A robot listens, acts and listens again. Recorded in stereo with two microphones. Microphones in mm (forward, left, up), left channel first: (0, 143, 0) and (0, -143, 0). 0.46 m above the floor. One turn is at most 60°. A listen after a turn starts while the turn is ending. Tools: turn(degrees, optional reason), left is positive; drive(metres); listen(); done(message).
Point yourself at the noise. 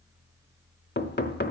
turn(degrees=35, reason="The knocking: about 35° left or 145° left.")
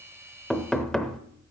done("Facing the knocking.")